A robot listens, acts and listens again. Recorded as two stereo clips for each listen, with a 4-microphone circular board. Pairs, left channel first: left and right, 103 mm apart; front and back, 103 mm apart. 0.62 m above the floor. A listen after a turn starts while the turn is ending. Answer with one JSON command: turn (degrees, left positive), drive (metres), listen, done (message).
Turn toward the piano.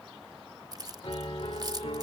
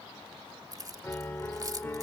{"turn": 65}
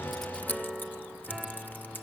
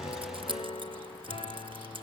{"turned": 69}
{"done": "Found it: a piano, straight ahead."}